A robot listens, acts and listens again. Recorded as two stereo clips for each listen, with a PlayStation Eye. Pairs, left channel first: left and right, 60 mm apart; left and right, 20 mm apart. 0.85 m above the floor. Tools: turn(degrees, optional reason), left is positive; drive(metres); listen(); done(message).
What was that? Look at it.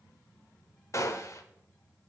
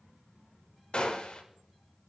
turn(degrees=55, reason="The gunshot: about 55° left or 125° left.")
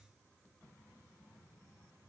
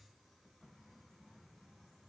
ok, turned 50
listen()
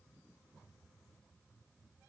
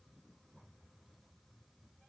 done("I heard a gunshot, but can't make it out now. It was about 5° left or 75° left.")